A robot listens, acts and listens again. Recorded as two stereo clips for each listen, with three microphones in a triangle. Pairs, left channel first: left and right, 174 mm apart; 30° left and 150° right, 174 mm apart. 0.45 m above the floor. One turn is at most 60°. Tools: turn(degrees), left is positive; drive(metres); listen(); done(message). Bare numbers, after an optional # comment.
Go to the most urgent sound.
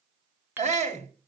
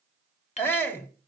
# The shout: 45° right.
turn(-45)
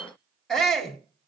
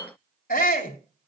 drive(1.0)
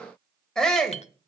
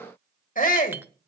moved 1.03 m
drive(1.0)
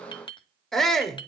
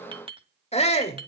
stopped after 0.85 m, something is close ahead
done("Arrived at the shout, straight ahead.")